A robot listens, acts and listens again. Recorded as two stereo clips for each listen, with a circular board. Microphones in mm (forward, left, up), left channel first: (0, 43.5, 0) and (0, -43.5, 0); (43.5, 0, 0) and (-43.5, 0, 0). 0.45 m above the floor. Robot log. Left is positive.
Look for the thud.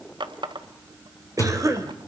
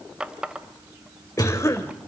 note: The thud: 40° left.
cmd yaw +40
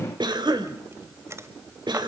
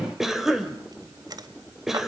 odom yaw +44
end: I heard a thud from this way, but can't make it out now.